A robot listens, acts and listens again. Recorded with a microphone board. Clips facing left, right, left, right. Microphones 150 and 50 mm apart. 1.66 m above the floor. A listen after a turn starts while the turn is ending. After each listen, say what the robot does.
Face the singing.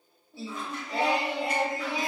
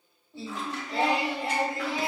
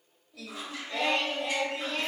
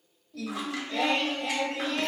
Turn 20° left.
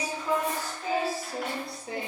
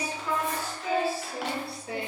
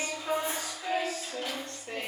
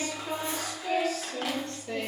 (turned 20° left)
Turn 40° left.
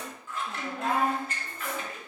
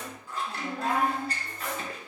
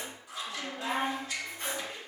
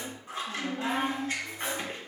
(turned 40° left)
Turn 15° left.
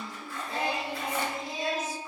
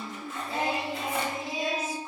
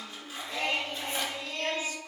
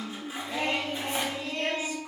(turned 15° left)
Turn 15° right.
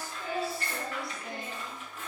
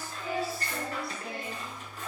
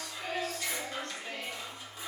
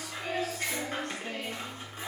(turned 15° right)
Found it: singing, straight ahead, 1 to 2 m away.